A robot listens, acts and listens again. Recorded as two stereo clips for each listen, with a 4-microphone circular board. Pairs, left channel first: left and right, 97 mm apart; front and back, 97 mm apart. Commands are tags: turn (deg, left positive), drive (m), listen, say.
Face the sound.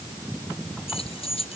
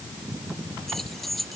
<turn deg="90"/>
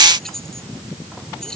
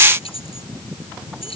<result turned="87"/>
<say>Facing the keys jangling.</say>